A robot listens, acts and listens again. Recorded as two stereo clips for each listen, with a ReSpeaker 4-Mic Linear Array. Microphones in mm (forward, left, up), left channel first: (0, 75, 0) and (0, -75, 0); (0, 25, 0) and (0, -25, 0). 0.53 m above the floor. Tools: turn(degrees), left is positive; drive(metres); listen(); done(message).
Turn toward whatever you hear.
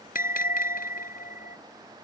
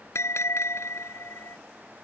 turn(degrees=75)
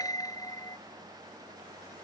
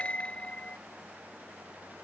turn(degrees=25)
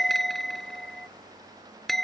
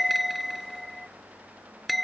done("Found it: a bell, straight ahead.")